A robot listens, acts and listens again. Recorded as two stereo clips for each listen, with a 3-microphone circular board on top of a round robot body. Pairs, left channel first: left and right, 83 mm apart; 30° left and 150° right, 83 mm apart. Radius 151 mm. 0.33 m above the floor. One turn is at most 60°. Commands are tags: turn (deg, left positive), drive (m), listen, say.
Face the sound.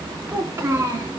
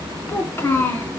<turn deg="-35"/>
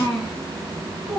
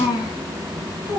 <turn deg="-10"/>
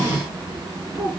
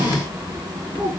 <turn deg="-10"/>
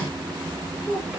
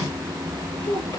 <say>Found it: a child speaking, straight ahead.</say>